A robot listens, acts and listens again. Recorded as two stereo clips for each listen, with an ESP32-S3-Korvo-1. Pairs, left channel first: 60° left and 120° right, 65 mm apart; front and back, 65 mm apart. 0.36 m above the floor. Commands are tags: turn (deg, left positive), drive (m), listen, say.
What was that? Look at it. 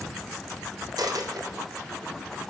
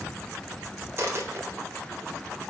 <turn deg="-130"/>
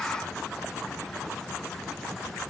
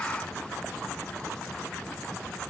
<say>Facing where the dropped coin came from. I can't hear it now.</say>